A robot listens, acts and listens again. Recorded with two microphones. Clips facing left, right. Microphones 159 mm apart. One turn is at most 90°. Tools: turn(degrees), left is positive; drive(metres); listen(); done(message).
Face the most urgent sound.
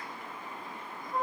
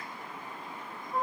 listen()
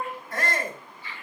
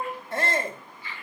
turn(degrees=-25)
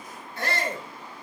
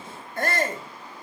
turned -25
turn(degrees=-90)
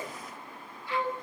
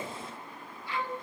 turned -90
turn(degrees=-40)
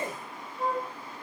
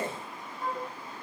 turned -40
turn(degrees=-40)
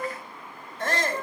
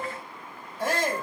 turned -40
turn(degrees=-10)
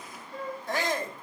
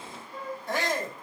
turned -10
done("Facing the shout.")